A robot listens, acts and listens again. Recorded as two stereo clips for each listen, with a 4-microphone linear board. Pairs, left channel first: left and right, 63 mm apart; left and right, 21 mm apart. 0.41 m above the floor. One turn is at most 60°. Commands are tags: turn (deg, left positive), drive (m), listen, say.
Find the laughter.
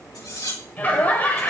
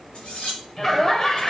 <turn deg="25"/>
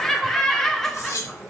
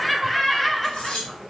<say>Found it: laughter, straight ahead, 1 to 2 m away.</say>